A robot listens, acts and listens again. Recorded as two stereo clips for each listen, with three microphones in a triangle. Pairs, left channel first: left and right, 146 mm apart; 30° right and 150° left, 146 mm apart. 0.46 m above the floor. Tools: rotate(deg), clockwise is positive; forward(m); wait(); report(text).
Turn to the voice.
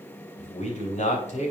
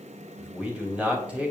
rotate(-70)
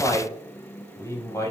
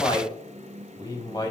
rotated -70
rotate(-25)
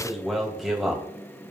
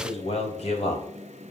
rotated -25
report("Found it: a man speaking, straight ahead.")